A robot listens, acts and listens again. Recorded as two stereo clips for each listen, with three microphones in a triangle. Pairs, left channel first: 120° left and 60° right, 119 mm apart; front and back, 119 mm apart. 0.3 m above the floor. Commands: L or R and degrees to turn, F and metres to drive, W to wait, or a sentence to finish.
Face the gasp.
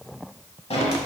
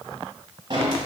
W
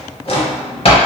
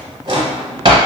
W
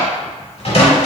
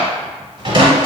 I can't make out a gasp to turn to.